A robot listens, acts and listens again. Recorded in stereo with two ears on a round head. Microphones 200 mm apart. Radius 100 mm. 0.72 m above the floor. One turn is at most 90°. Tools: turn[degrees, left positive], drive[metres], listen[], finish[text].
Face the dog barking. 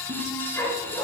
Action: turn[30]
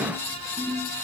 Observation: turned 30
Action: listen[]
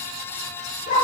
Thought: So it is at 140° left.
Action: turn[90]
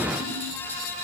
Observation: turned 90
Thought: Nothing new. It was at 50° left.
Action: turn[50]
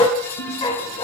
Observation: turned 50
Thought: The dog barking is now 20° left.
Action: turn[20]
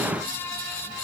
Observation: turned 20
Action: listen[]
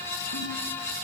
Action: listen[]
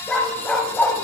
Action: finish[Facing the dog barking.]